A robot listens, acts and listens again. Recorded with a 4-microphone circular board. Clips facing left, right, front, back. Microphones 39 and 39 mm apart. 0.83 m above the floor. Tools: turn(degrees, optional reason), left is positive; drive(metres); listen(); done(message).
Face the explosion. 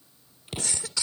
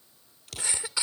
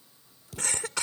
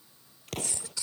turn(degrees=155, reason="The explosion: 155° left.")
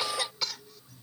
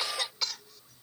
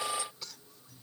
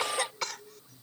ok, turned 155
done("I heard an explosion from this way, but can't make it out now.")